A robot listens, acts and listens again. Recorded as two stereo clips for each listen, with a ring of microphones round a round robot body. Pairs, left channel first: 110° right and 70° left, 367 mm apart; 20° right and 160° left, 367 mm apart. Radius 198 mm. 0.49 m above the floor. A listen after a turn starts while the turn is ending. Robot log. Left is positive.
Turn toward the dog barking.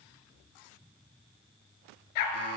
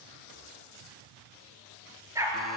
note: The dog barking: 120° right.
cmd yaw -120
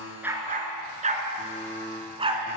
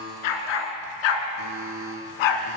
note: The dog barking is now 10° right.
cmd yaw -10
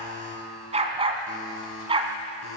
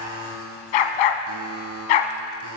note: The dog barking is now 10° right.
cmd yaw -10
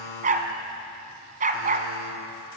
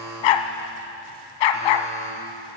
end: Facing the dog barking.